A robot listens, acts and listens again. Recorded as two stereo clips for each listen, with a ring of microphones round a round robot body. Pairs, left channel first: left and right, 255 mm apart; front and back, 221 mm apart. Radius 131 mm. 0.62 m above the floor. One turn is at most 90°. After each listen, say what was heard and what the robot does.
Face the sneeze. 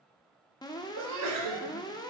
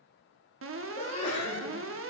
The sneeze: 70° right. Turn 70° right.
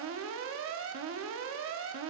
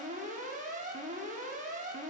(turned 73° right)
I heard a sneeze from this way, but can't make it out now.